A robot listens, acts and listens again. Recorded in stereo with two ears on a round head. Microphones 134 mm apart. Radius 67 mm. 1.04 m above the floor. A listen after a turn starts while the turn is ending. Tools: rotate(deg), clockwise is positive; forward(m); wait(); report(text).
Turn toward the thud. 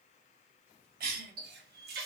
wait()
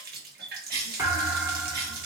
rotate(15)
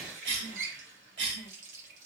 wait()
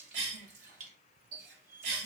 report("I heard a thud, but can't make it out now. It was about straight ahead or 150° right.")